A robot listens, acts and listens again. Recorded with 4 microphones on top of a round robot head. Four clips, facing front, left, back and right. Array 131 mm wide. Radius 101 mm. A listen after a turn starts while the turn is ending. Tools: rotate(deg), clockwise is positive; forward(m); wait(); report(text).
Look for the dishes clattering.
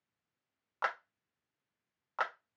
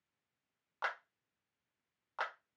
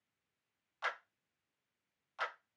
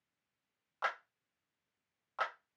wait()
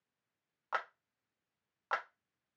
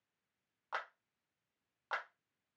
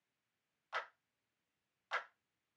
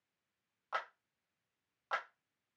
wait()
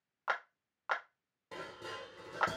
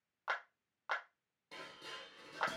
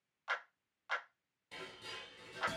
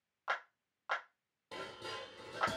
rotate(30)
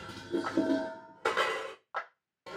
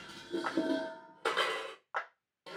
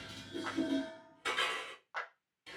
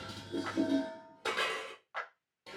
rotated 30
rotate(-30)
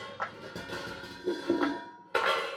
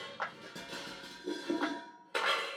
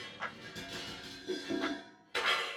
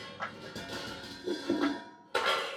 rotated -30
rotate(15)
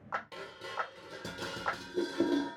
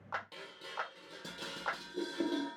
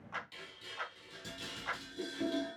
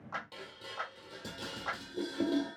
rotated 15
report("Found it: dishes clattering, straight ahead, 1 to 2 m away.")